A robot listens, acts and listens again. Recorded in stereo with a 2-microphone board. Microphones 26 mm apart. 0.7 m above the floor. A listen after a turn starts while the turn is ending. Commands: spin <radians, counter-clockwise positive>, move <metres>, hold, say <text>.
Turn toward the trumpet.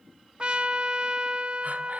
spin -0.70
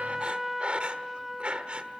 spin -0.17
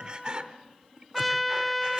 say Facing the trumpet, under 1 m away.